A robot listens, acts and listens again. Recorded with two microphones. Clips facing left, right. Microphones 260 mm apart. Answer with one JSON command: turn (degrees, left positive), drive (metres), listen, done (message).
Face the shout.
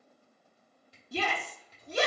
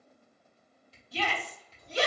{"turn": 50}
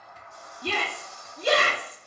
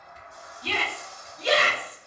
{"turn": 65}
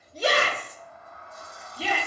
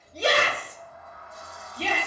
{"done": "Facing the shout, under 1 m away."}